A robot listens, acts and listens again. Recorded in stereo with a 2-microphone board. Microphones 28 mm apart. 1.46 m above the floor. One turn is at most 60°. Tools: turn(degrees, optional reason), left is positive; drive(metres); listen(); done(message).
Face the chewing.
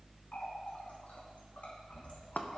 listen()
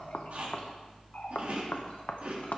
turn(degrees=-55, reason="The chewing: about 55° right or 125° right.")
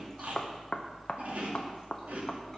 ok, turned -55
turn(degrees=-60, reason="So it is at 65° right.")
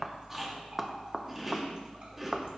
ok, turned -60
turn(degrees=-10, reason="The chewing is now 10° right.")
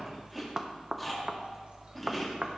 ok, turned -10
done("Found it: chewing, straight ahead, 2 to 4 m away.")